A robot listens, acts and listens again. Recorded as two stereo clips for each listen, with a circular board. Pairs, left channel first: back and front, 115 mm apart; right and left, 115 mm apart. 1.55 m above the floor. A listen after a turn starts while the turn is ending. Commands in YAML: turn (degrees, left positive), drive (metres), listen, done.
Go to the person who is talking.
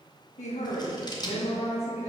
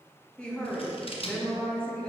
turn: -170
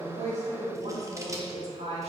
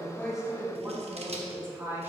turn: 20
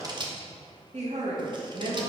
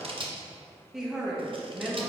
drive: 1.0
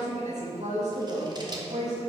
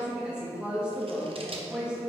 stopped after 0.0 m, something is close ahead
turn: 10
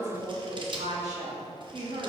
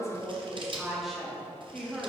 done: "Something is in my way. I am facing the woman speaking but have not reached it."